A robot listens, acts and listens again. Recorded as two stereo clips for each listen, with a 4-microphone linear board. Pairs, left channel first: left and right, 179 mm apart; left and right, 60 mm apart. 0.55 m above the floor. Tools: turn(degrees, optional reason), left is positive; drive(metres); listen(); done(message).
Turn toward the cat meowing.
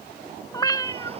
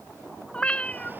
turn(degrees=20, reason="The cat meowing: about 20° left or 160° left.")
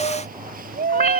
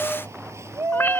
turn(degrees=140, reason="So it is at 140° left.")
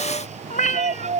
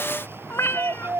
turn(degrees=50, reason="The cat meowing is now 50° left.")
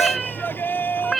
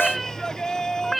done("Facing the cat meowing.")